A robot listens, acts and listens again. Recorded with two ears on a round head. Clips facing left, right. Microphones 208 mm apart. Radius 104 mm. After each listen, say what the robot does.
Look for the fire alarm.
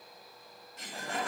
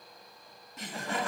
Keep listening.
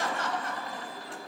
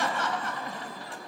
Keep listening.
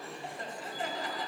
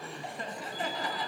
I can't make out a fire alarm to turn to.